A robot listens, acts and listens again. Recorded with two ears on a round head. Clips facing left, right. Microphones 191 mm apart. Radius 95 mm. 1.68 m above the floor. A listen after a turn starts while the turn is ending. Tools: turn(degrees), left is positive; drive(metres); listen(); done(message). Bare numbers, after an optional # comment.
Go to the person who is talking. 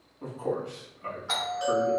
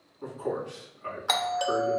# The man speaking: about 50° left or 130° left.
turn(50)
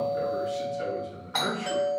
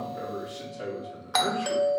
drive(1.0)
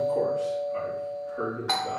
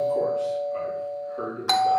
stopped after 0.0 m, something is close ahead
done("Blocked. The man speaking is further on, straight ahead.")